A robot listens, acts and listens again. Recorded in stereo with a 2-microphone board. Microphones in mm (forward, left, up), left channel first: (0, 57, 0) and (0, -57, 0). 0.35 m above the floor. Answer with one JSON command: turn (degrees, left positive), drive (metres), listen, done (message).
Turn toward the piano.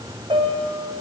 {"turn": -60}
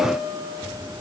{"turn": -25}
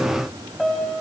{"done": "Found it: a piano, straight ahead, 1 to 2 m away."}